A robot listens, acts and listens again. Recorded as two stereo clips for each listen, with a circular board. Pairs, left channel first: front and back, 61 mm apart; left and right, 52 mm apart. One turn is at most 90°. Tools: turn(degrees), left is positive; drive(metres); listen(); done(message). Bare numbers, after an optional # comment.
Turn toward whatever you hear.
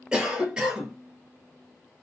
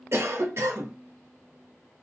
# The cough: 105° right.
turn(-90)
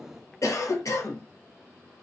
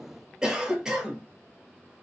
# The cough is now 15° right.
turn(-15)
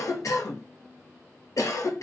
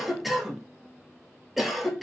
done("Facing the cough, under 1 m away.")